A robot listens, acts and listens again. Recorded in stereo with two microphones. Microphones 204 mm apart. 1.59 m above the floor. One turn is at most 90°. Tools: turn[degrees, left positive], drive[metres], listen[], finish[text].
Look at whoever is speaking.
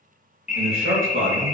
Action: turn[-90]
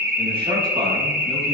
Action: listen[]
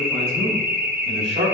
Thought: The man speaking is now 35° right.
Action: turn[-35]
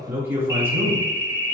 Thought: The man speaking is now 15° right.
Action: turn[-15]
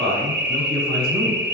Action: finish[Facing the man speaking.]